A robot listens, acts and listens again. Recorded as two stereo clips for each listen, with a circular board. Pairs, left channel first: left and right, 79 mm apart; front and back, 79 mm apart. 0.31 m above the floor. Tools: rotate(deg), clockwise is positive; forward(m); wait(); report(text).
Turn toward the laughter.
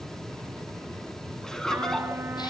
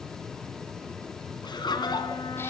rotate(-10)
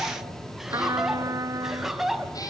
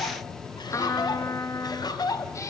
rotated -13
report("Found it: laughter, straight ahead, 2 to 4 m away.")